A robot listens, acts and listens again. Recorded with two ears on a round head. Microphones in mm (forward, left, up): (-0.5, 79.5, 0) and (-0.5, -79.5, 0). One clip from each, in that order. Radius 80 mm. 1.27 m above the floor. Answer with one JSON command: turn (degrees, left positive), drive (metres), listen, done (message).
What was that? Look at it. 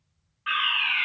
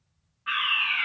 {"turn": 65}
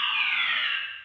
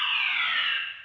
{"done": "Found it: a fire alarm, straight ahead, 2 to 4 m away."}